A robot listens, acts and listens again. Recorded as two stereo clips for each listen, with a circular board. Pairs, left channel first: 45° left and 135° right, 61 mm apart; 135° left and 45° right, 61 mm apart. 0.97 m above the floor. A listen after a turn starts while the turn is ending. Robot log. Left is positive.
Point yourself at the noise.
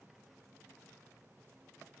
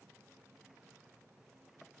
cmd idle
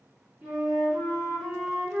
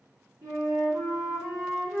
note: The flute: 70° right.
cmd yaw -70
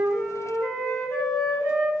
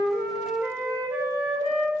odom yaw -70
end: Found it: a flute, straight ahead, 1 to 2 m away.